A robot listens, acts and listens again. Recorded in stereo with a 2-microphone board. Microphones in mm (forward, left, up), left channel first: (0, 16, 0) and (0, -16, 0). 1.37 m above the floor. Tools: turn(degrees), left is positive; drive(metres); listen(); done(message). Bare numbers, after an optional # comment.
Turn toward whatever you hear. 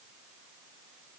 listen()
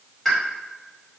turn(30)
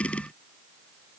listen()
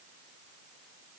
done("I heard a pop, but can't make it out now. It was about 25° right or 145° left.")